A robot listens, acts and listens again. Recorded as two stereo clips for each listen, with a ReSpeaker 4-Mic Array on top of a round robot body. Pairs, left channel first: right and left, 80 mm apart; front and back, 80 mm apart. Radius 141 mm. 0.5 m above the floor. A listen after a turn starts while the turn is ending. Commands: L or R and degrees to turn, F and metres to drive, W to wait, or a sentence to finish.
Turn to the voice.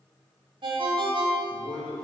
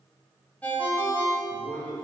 R55
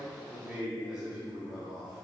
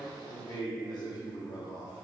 L10
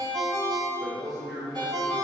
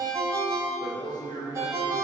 Found it: a man speaking, straight ahead.